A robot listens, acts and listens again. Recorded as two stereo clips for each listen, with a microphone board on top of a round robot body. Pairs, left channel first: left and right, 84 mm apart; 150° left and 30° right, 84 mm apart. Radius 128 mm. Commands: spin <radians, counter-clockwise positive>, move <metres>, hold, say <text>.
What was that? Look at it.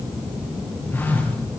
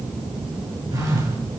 spin 0.35
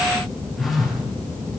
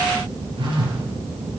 say Facing the phone buzzing.